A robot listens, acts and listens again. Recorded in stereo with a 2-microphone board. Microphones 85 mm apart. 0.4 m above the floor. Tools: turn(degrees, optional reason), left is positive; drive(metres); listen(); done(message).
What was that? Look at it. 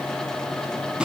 turn(degrees=-30)
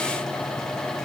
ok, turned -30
listen()
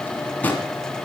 turn(degrees=20, reason="So it is at 20° left.")
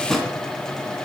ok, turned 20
done("Facing the drawer, 2 to 4 m away.")